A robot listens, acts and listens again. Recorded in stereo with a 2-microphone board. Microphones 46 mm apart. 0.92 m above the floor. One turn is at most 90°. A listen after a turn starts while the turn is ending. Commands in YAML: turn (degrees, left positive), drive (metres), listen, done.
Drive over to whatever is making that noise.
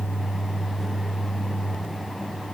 listen: true
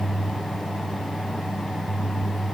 listen: true
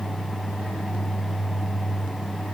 done: "I can't make out anything to turn to."